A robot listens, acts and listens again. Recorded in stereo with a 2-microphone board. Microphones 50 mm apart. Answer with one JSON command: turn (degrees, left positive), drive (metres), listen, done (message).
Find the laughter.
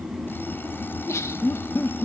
{"turn": 70}
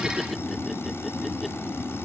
{"listen": true}
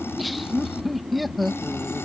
{"done": "Found it: laughter, straight ahead."}